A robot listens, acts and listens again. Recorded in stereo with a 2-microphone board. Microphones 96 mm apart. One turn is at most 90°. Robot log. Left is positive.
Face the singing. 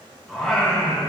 cmd yaw +30
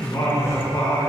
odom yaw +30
note: So it is at 135° left.
cmd yaw +90
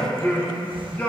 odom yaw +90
note: The singing is now 20° left.
cmd yaw +20
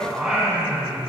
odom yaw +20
note: The singing is now 15° right.
cmd yaw -15
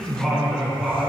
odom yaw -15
end: Found it: singing, straight ahead.